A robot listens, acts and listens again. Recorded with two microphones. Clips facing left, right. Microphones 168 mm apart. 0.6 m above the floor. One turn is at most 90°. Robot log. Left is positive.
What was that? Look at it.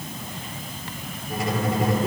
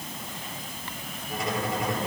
cmd yaw +30
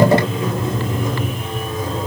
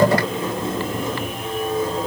note: So it is at 30° right.
cmd yaw -30
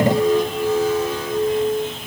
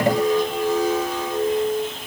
note: The squeak is now 20° right.
cmd yaw -20
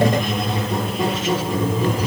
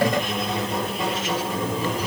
end: Found it: a squeak, straight ahead, over 4 m away.